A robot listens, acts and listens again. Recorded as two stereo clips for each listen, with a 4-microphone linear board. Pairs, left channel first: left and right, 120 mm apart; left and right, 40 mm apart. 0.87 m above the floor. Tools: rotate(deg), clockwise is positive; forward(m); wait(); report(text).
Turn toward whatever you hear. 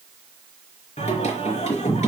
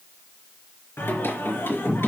rotate(-90)
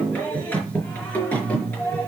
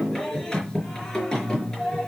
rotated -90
rotate(-15)
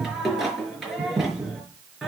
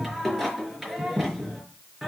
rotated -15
report("Facing the singing, over 4 m away.")